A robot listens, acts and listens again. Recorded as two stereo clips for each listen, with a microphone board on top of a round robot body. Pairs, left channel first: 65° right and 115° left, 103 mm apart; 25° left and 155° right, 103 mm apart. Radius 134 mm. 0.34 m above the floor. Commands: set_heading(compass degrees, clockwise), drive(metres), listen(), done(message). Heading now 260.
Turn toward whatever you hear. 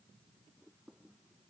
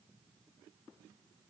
listen()
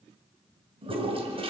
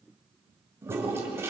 set_heading(125)
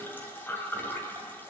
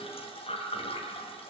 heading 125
done("Found it: a toilet flushing, straight ahead.")